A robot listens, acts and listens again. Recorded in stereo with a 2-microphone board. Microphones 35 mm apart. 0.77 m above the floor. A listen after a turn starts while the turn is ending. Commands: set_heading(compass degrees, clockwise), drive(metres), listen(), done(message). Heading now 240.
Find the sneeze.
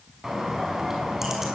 listen()
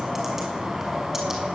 listen()
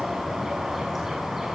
done("I can't make out a sneeze, only a bird.")